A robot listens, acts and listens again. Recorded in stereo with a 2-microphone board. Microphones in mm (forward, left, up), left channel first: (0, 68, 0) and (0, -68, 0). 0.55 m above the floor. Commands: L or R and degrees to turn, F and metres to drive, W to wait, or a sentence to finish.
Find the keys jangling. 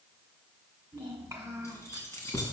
L20
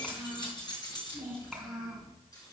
L30
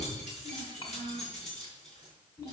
L125
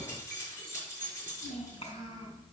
L20
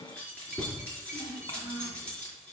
L10
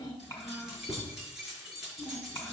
Found it: keys jangling, straight ahead.